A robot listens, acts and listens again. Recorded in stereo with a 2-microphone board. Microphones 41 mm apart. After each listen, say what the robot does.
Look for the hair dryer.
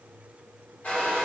Turn 30° left.
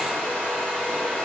Facing the hair dryer.